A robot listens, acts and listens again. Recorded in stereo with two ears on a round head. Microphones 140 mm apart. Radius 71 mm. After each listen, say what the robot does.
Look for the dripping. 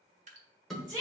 Turn 50° right.
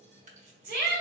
Turn 65° right.
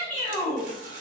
Keep listening.
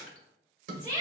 Keep listening.
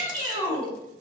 Facing where the dripping came from. I can't hear it now.